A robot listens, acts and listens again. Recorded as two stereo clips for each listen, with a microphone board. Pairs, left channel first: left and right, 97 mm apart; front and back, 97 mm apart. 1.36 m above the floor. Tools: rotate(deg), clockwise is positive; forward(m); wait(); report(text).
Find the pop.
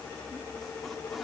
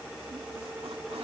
wait()
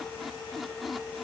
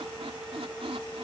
wait()
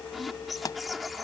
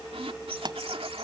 rotate(-140)
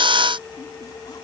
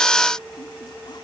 report("Facing where the pop came from. I can't hear it now.")